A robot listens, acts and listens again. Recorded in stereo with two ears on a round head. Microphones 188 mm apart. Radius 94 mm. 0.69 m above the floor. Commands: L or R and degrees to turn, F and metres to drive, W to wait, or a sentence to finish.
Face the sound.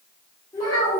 L20
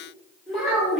Found it: a child speaking, straight ahead.